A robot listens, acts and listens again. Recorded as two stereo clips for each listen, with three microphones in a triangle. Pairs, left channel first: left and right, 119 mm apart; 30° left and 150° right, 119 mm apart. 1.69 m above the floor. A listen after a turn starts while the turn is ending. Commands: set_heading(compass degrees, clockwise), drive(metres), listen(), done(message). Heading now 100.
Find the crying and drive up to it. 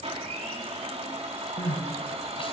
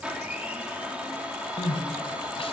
set_heading(40)
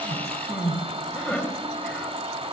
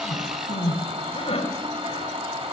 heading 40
set_heading(30)
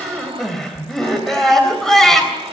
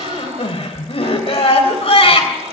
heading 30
drive(1.0)
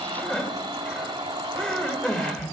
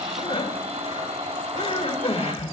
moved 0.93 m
set_heading(20)
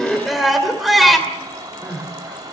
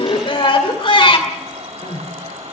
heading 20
drive(1.0)
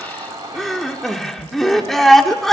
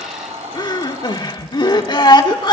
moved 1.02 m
drive(1.0)
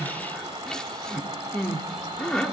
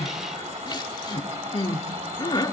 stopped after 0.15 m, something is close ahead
set_heading(10)
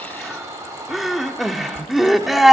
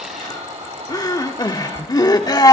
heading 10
done("Arrived at the crying, straight ahead.")